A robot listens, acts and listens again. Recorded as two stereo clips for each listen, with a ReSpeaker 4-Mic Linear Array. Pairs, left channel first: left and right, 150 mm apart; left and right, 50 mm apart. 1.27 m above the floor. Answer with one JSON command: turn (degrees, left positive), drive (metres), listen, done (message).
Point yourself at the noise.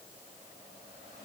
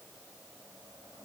{"listen": true}
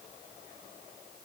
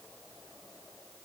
{"listen": true}
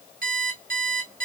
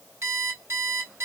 {"turn": -65}
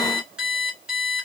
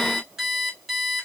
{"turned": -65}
{"done": "Facing the alarm clock."}